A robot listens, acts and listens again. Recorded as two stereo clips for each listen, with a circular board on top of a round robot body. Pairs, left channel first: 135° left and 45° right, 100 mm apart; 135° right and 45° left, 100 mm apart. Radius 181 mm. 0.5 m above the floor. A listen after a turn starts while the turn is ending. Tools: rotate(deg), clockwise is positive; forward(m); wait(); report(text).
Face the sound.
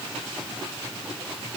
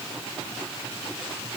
wait()
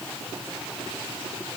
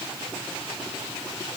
wait()
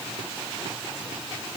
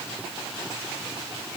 report("I can't make out anything.")